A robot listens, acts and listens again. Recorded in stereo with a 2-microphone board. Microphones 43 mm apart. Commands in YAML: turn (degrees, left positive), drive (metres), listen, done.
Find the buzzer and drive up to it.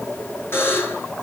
turn: 65
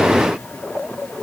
listen: true
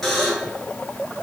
drive: 1.0
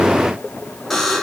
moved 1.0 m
drive: 1.0
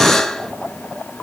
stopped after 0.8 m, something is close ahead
turn: 10
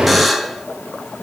done: "Arrived at the buzzer, straight ahead."